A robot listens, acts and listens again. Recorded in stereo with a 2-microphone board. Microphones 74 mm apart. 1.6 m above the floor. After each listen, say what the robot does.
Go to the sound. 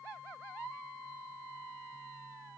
Keep listening.
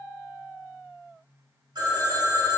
Turn 90° right.
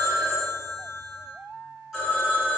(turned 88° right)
Drive 1.0 m forward.
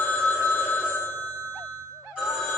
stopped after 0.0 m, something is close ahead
Turn 10° right.
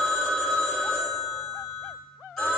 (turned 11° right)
Blocked. The phone ringing is further on, straight ahead.